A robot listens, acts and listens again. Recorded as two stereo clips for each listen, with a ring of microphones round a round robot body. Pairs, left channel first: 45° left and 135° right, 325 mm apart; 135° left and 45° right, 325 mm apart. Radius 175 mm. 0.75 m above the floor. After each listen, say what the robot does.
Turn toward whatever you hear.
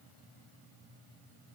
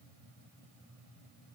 Keep listening.
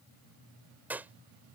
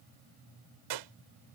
Turn 50° right.
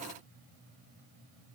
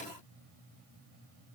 Facing where the gunshot came from. I can't hear it now.